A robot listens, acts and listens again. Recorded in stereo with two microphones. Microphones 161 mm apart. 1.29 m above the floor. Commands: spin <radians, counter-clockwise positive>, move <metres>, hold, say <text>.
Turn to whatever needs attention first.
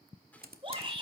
spin -0.61
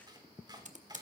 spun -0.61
hold
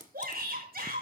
spin -1.92
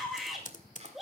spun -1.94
say Found it: a shout, straight ahead, over 4 m away.